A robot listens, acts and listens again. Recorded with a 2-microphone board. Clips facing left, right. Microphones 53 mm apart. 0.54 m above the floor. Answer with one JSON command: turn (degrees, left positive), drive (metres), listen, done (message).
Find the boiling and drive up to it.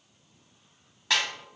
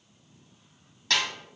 {"listen": true}
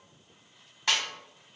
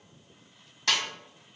{"listen": true}
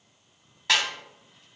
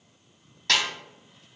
{"done": "I can't make out boiling to turn to."}